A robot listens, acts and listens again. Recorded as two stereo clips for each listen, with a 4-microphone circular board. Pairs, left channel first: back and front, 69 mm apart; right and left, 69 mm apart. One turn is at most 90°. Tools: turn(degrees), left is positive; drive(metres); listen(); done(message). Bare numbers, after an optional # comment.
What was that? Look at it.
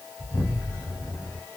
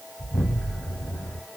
# The explosion: 150° right.
turn(-90)
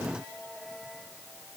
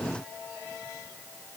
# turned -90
# Nothing new. It was at 60° right.
turn(-60)
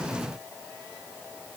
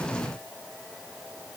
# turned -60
done("I heard an explosion from this way, but can't make it out now.")